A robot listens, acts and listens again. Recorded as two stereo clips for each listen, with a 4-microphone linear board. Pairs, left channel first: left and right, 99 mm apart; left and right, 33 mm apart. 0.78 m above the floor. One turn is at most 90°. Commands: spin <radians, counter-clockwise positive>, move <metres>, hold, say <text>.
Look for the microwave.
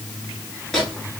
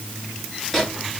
spin 0.52
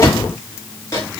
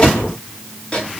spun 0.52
spin 1.57
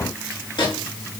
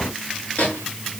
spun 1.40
spin 1.05
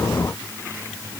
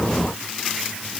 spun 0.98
say Found it: a microwave, straight ahead, 1 to 2 m away.